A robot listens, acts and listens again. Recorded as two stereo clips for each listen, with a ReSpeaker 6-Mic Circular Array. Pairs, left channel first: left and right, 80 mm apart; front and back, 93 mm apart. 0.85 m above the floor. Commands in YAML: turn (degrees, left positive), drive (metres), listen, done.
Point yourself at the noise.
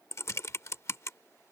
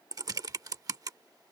turn: 140
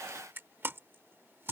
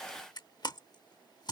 turn: -30
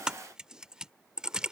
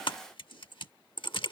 turn: -10
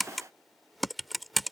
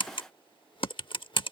done: "Found it: typing on a keyboard, straight ahead."